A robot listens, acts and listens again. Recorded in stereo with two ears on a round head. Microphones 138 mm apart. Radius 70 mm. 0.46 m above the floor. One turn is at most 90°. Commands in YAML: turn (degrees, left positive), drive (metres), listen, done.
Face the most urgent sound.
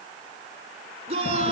turn: -40
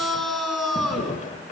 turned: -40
done: "Found it: a shout, straight ahead, over 4 m away."